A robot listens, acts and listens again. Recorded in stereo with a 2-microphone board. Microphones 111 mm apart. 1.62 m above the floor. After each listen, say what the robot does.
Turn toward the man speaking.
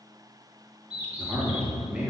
Turn 30° right.
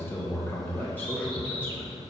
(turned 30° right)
Turn 15° left.
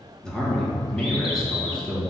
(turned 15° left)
Facing the man speaking, 2 to 4 m away.